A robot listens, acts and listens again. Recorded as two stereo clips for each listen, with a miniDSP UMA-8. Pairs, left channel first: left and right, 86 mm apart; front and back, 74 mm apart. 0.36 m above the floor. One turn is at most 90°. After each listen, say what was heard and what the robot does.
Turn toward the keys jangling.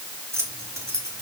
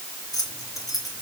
The keys jangling: 35° right. Turn 35° right.
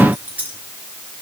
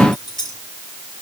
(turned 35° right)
The keys jangling is now 20° right. Turn 20° right.
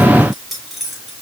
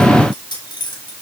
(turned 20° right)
Facing the keys jangling, 2 to 4 m away.